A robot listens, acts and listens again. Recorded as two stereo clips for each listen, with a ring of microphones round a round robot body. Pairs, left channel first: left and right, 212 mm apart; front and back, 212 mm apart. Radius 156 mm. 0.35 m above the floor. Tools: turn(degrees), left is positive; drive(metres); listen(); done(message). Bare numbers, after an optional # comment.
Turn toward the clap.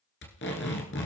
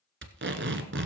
listen()
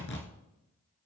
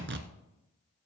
listen()
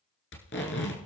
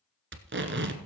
done("I can't make out a clap, only tape being pulled.")